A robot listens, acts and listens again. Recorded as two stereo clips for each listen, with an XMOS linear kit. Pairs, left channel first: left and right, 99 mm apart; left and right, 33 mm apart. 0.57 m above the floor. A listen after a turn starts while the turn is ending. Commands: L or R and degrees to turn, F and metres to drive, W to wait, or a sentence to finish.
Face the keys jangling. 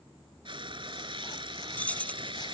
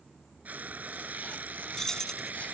L30
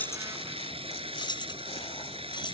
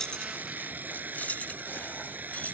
L130
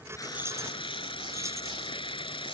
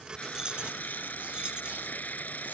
W
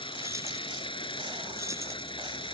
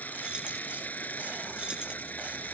W
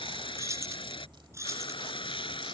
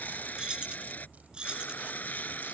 R30
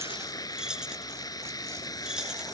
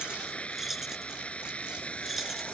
Facing the keys jangling.